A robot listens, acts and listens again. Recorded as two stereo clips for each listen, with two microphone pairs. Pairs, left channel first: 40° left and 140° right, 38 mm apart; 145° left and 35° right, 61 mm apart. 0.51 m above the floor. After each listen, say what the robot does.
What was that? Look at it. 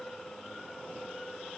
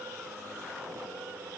Keep listening.
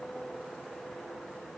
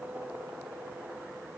Keep listening.
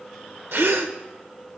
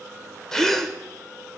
Turn 130° right.
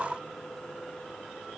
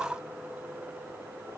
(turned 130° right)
I heard a gasp from this way, but can't make it out now.